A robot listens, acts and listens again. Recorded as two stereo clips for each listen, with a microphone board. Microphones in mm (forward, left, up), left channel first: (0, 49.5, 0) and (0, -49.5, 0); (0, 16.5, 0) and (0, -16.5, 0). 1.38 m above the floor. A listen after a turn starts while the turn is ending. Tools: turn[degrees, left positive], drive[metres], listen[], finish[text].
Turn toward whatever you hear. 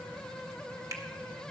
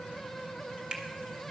Thought: The finger snap: about 30° right or 150° right.
Action: turn[-30]
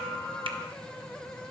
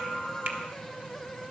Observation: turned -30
Thought: So it is at 120° right.
Action: turn[-120]
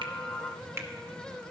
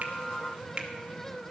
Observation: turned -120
Thought: The finger snap is now 25° right.
Action: turn[-25]
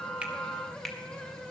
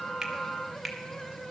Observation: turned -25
Action: finish[Found it: a finger snap, straight ahead.]